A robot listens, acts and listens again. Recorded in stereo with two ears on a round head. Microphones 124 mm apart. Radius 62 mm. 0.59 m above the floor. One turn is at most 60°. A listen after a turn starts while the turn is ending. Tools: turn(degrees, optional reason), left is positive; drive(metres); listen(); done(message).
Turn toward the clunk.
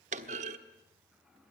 turn(degrees=-55, reason="The clunk: about 55° right or 125° right.")
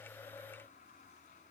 listen()
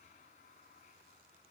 done("I heard a clunk, but can't make it out now. It was about straight ahead or 70° right.")